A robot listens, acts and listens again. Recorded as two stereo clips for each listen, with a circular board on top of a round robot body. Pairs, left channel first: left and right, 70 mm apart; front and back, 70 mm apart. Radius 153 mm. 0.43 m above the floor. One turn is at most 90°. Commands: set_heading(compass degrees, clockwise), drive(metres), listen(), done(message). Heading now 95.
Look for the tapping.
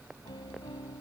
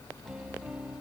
listen()
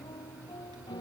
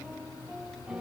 listen()
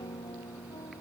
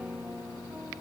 done("I can't make out tapping, only a piano.")